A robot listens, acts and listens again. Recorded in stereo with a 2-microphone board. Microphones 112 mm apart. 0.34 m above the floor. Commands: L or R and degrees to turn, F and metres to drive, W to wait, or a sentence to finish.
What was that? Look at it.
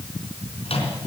L60
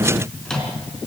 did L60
Facing the microwave, 2 to 4 m away.